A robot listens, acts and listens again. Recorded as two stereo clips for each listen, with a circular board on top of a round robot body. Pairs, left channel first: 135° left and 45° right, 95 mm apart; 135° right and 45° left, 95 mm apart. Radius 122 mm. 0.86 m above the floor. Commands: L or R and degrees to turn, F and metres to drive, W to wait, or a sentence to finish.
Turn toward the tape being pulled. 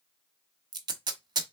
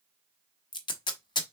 R90
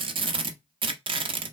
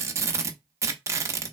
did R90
R15
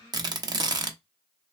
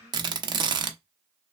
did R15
Found it: tape being pulled, straight ahead.